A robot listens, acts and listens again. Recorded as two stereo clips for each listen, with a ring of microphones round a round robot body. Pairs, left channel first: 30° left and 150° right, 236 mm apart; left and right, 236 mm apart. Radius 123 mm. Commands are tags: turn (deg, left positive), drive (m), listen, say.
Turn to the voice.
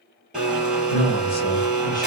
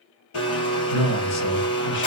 <turn deg="90"/>
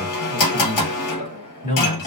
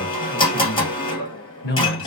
<turn deg="75"/>
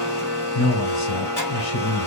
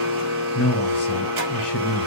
<turn deg="30"/>
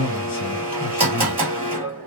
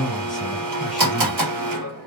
<say>Found it: a man speaking, straight ahead.</say>